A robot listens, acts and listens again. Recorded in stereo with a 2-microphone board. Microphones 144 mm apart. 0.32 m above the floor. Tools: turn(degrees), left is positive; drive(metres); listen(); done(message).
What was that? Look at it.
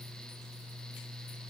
listen()
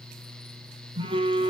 turn(degrees=-35)
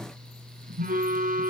turn(degrees=-110)
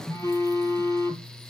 turn(degrees=20)
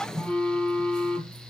done("Facing the phone buzzing, 1 to 2 m away.")